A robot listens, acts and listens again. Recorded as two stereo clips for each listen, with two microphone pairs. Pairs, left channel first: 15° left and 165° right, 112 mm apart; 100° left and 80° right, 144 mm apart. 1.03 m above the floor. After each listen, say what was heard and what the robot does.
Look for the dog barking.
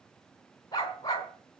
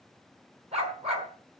The dog barking: 40° right. Turn 40° right.
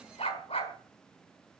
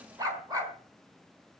The dog barking is now 15° right. Turn 15° right.
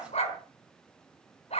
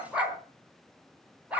Found it: a dog barking, straight ahead.